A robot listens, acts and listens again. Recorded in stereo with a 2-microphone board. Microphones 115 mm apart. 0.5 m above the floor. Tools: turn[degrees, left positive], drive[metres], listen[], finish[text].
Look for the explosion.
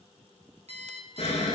Thought: The explosion: about 75° left or 105° left.
Action: turn[75]
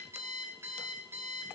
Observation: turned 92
Action: listen[]
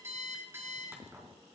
Action: finish[I heard an explosion, but can't make it out now. It was about 15° left or 20° right.]